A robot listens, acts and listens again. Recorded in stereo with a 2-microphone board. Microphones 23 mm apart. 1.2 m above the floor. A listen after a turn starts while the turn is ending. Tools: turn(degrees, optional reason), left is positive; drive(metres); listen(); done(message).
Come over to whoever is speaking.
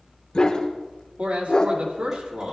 turn(degrees=-90)
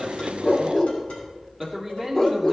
drive(metres=1.0)
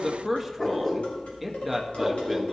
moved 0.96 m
drive(metres=1.0)
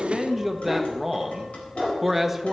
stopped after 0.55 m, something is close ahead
turn(degrees=-10, reason="The man speaking is now 10° right.")
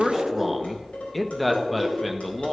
done("I am next to the man speaking.")